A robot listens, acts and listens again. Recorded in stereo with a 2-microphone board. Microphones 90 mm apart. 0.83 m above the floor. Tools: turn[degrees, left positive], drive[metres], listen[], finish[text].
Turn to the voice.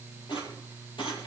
Action: listen[]
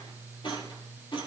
Action: listen[]
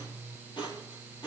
Action: finish[I can't make out anyone speaking, only a rattle.]